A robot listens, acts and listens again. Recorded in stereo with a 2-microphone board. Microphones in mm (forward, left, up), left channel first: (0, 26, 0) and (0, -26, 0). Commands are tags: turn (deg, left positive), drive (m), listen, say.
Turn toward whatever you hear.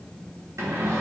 <turn deg="-90"/>
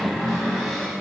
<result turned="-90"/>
<say>Facing the cupboard door, 2 to 4 m away.</say>